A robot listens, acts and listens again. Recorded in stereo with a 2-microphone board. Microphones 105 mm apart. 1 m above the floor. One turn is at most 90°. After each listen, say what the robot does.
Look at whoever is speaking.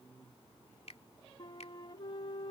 Keep listening.
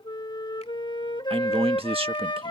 Turn 60° right.
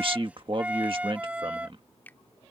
Turn 60° right.
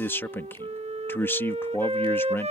Turn 20° left.
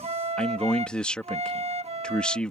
Turn 10° left.
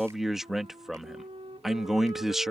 Facing the man speaking.